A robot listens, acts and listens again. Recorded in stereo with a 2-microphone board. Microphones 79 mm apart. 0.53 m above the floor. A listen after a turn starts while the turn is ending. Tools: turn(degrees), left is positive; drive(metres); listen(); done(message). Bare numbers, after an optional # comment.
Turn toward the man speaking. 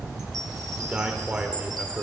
# The man speaking: about 15° right or 165° right.
turn(-15)
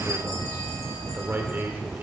# So it is at 150° right.
turn(-150)
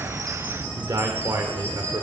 # The man speaking is now 70° right.
turn(-70)
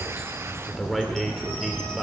done("Found it: a man speaking, straight ahead.")